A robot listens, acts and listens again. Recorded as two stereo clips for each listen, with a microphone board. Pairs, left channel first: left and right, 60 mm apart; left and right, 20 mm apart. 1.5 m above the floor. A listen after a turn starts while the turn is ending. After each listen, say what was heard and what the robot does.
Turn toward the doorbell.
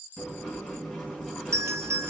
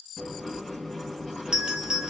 The doorbell: about 50° right or 130° right. Turn 50° right.
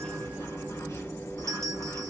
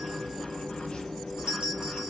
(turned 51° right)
Keep listening.
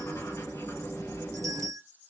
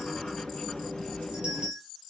Keep listening.
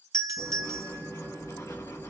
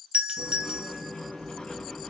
So it is at 75° right. Turn 75° right.
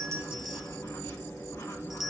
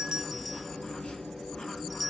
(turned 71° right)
Keep listening.
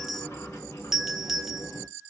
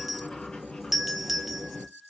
Found it: a doorbell, straight ahead.